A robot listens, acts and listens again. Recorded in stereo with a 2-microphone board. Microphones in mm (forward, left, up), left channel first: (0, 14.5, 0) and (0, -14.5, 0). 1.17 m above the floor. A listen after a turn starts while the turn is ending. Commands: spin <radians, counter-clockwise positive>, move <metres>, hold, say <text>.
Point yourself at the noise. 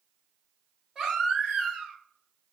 spin -0.26
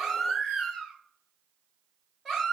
say Found it: a baby crying, straight ahead.